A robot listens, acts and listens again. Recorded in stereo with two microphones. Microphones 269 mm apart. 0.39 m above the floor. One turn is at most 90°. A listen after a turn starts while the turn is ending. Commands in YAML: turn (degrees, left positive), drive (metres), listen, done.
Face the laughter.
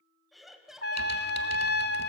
turn: 30
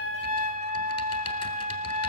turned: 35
listen: true
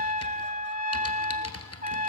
listen: true
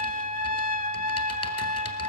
done: "I heard laughter, but can't make it out now. It was about 35° right or 145° left."